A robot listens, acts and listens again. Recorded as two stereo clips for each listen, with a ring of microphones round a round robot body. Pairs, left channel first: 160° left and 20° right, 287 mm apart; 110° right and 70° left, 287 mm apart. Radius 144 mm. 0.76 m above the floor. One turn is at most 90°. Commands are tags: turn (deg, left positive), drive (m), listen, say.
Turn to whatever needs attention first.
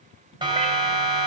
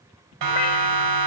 <turn deg="50"/>
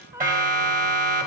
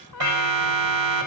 <turn deg="40"/>
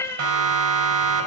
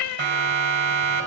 <turn deg="15"/>
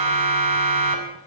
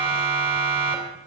<say>Facing the siren, 2 to 4 m away.</say>